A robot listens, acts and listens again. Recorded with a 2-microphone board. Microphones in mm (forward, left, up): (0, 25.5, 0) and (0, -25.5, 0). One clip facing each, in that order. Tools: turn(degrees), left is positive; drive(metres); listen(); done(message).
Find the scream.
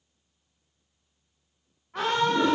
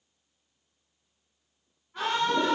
turn(degrees=65)
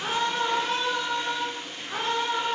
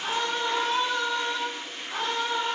turn(degrees=20)
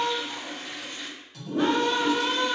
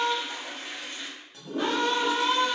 done("Facing the scream, under 1 m away.")